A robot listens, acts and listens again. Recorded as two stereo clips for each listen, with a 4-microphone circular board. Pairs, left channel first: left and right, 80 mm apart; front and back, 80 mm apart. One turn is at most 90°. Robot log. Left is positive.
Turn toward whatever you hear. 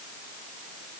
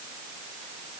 cmd idle
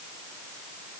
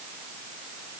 cmd idle
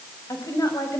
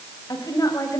note: The woman speaking: 45° left.
cmd yaw +45
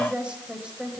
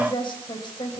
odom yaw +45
note: The woman speaking is now 15° right.
cmd yaw -15
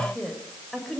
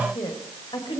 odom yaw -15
end: Facing the woman speaking, over 4 m away.